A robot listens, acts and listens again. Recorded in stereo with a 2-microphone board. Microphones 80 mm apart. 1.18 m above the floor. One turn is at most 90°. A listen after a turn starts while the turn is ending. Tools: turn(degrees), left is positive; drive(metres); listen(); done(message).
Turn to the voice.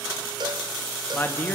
turn(degrees=25)
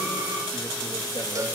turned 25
listen()
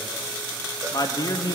turn(degrees=90)
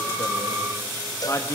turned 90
turn(degrees=35)
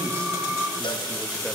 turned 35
listen()
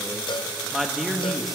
done("Found it: a man speaking, straight ahead.")